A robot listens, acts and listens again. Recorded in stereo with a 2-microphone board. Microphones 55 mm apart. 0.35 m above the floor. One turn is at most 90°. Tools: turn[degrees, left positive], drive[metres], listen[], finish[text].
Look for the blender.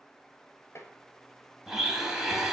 Action: turn[-30]
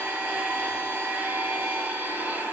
Thought: So it is at 140° right.
Action: turn[-90]
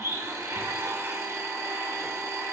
Thought: The blender is now 80° right.
Action: turn[-80]
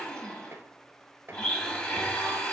Thought: The blender is now 20° left.
Action: turn[20]
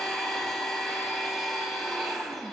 Action: finish[Found it: a blender, straight ahead.]